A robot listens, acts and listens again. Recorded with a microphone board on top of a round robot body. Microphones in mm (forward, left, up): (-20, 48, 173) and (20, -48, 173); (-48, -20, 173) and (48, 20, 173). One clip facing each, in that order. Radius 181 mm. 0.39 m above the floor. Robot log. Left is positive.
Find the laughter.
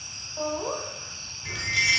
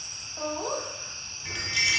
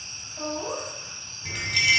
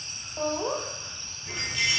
note: The laughter: 40° left.
cmd yaw +40
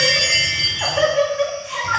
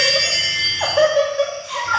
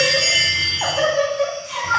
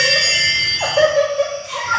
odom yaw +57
note: The laughter is now 10° left.
cmd yaw +10
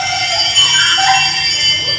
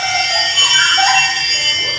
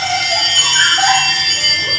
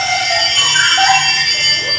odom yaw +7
cmd idle
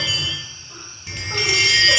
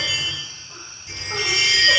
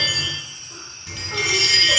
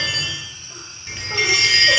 cmd idle
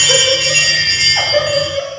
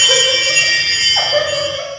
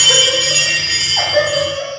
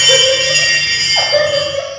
note: The laughter is now 15° left.
cmd yaw +15
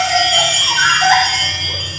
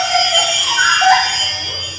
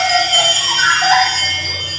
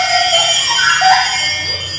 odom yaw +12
end: Found it: laughter, straight ahead.